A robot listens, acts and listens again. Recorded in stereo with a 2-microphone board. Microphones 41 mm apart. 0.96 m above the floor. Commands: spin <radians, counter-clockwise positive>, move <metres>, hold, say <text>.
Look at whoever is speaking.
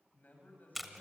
spin 0.79
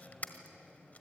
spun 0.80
hold
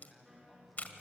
say Facing the man speaking, over 4 m away.